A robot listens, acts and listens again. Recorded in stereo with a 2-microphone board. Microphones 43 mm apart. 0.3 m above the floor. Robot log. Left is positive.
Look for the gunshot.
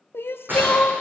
note: The gunshot: about 55° right or 125° right.
cmd yaw -55
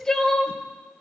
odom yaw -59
cmd idle
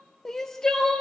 end: I heard a gunshot, but can't make it out now. It was about 5° left or 65° right.